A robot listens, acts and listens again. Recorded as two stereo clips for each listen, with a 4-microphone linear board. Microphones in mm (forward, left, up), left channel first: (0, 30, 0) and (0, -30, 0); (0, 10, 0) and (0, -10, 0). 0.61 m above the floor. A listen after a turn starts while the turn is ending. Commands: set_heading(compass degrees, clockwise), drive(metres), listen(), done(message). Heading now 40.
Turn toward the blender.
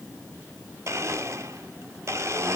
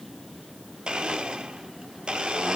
set_heading(95)
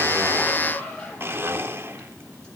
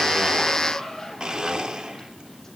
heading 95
set_heading(145)
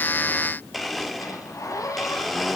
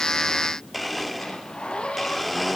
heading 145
done("Facing the blender.")